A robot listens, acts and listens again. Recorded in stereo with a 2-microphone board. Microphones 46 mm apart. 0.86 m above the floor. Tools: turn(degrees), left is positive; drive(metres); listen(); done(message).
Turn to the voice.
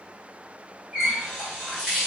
listen()
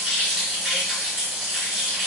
listen()
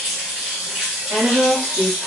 turn(degrees=-50)
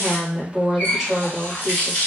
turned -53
done("Found it: a woman speaking, straight ahead, 1 to 2 m away.")